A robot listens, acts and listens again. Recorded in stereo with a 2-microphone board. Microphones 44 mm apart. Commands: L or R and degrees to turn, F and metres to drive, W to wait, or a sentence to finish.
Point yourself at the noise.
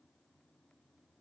W
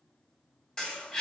L15
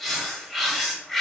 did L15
Facing the bird.